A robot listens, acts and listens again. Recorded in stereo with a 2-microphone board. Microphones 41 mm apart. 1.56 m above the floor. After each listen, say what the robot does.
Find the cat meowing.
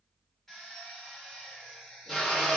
Keep listening.
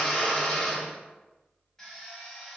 Keep listening.
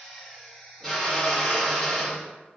I can't make out a cat meowing to turn to.